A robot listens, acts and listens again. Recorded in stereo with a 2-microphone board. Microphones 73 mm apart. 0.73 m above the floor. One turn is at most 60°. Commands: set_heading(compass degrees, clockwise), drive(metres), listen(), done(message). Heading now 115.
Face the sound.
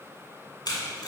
set_heading(55)
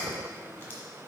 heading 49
set_heading(24)
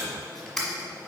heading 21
set_heading(11)
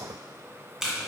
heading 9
done("Found it: tape being pulled, straight ahead.")